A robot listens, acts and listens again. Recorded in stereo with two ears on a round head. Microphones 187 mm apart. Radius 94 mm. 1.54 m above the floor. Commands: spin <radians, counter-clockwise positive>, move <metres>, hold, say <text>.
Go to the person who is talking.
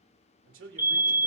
spin -1.13
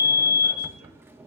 hold
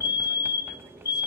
hold
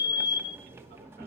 say I heard a man speaking, but can't make it out now. It was about straight ahead or 50° right. I did not reach it.